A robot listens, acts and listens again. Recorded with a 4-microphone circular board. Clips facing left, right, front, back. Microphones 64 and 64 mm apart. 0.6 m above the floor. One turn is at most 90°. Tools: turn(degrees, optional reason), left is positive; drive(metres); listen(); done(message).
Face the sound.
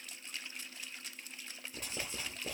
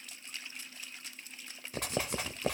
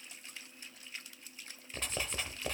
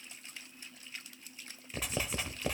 turn(degrees=-90, reason="The writing: 95° right.")
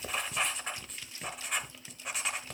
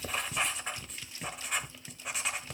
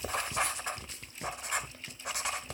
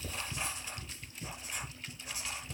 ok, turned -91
done("Facing the writing, under 1 m away.")